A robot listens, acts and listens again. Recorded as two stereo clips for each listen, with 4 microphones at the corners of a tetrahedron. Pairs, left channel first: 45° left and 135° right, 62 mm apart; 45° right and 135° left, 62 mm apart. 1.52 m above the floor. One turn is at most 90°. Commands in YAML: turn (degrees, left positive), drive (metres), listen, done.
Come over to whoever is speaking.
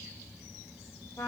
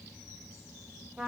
listen: true
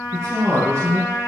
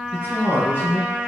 turn: -90
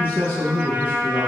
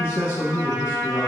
drive: 1.0
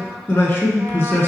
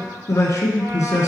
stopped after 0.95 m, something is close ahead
done: "I am next to the man speaking."